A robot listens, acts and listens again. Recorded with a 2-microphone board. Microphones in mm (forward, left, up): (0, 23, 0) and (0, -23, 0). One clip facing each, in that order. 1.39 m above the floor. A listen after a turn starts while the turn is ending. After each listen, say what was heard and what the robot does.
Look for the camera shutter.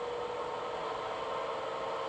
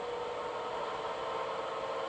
Keep listening.
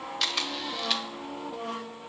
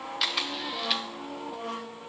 Turn 30° right.
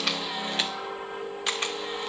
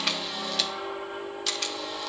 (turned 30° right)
So it is at 30° left. Turn 30° left.
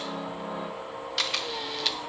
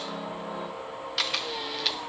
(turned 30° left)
Found it: a camera shutter, straight ahead, under 1 m away.